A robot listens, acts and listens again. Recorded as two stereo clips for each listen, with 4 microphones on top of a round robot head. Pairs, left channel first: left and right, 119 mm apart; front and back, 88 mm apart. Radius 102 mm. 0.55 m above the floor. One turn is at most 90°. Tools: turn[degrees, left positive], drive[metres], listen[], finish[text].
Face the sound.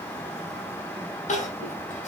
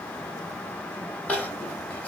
Thought: The crying: 75° left.
Action: turn[75]
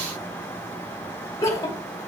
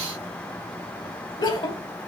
Thought: The crying is now 25° left.
Action: turn[25]
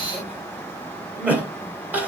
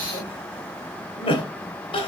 Thought: The crying is now 15° right.
Action: turn[-15]
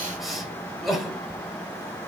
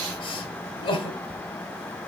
Action: finish[Facing the crying, 2 to 4 m away.]